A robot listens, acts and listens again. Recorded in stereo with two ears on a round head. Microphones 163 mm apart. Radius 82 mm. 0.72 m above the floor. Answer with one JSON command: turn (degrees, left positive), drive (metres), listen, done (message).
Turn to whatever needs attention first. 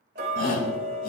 {"turn": 45}
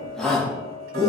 {"done": "Found it: a shout, straight ahead."}